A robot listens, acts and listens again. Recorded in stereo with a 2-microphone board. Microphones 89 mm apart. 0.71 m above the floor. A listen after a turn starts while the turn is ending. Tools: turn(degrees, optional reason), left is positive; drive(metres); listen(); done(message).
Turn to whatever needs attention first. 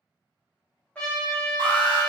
turn(degrees=-70, reason="The alarm: about 70° right or 110° right.")
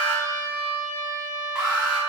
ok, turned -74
turn(degrees=-10, reason="So it is at 10° right.")
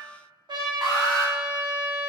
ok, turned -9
done("Facing the alarm.")